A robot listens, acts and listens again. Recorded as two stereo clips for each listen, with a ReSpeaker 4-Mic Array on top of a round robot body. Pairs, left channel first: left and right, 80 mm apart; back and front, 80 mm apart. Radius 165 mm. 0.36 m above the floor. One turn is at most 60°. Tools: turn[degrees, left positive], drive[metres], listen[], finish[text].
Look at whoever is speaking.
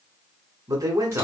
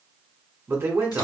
Thought: The man speaking: 55° right.
Action: turn[-55]
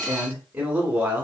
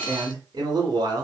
Thought: The man speaking is now 25° right.
Action: turn[-25]
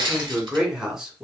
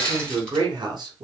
Thought: The man speaking is now 10° right.
Action: turn[-10]
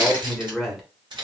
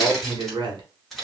Action: finish[Facing the man speaking.]